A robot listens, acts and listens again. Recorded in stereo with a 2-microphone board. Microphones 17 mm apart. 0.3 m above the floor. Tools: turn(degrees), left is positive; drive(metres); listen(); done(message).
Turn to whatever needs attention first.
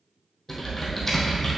listen()
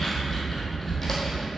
listen()
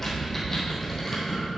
done("I can't make out anything urgent to turn to.")